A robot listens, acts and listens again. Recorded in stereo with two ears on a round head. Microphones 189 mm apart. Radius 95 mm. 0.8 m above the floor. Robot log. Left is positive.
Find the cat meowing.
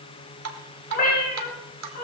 note: The cat meowing: about 45° left or 135° left.
cmd yaw +45
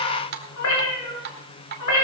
note: So it is at 80° left.
cmd yaw +80
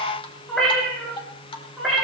end: Facing the cat meowing, over 4 m away.